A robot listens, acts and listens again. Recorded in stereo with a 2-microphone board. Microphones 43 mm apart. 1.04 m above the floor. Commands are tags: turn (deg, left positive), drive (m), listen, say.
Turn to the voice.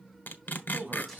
<turn deg="-45"/>
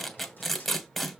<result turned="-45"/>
<listen/>
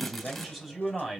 <say>Found it: a man speaking, straight ahead.</say>